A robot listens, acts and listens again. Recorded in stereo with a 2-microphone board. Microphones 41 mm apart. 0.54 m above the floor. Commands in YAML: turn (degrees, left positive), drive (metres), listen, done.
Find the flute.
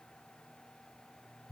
listen: true
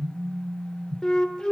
turn: 20
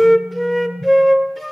done: "Found it: a flute, straight ahead, 1 to 2 m away."